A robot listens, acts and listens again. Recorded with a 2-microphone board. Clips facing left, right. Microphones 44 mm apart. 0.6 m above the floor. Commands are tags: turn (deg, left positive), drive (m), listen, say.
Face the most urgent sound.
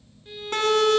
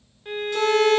<turn deg="60"/>
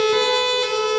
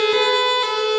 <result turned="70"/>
<turn deg="-10"/>
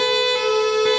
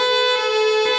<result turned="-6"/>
<say>Facing the siren, over 4 m away.</say>